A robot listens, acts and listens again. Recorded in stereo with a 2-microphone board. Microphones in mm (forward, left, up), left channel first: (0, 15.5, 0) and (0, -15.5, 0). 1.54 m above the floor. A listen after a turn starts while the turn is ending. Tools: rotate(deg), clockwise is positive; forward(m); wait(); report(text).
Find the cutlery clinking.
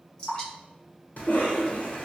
wait()
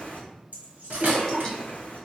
rotate(55)
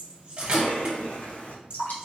rotate(40)
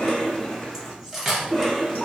report("Found it: cutlery clinking, straight ahead, 1 to 2 m away.")